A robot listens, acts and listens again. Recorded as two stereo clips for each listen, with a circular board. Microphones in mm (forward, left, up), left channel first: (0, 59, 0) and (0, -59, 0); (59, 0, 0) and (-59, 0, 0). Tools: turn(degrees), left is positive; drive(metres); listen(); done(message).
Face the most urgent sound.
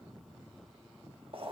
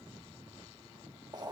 listen()
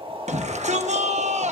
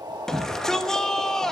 turn(degrees=-85)
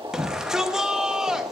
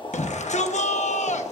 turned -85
done("Facing the shout, under 1 m away.")